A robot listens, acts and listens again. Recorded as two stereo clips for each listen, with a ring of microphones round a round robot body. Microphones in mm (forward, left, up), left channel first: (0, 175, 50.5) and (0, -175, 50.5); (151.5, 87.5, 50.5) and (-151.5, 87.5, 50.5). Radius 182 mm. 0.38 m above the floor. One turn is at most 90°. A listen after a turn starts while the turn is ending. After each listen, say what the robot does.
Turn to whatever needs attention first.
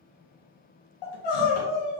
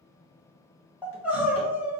Turn 90° left.
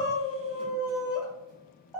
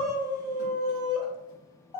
Facing the crying.